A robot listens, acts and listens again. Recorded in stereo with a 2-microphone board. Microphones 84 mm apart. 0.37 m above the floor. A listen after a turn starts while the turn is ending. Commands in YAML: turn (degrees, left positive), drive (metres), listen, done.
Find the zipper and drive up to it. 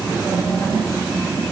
listen: true
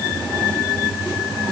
listen: true
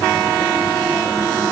done: "I can't make out a zipper."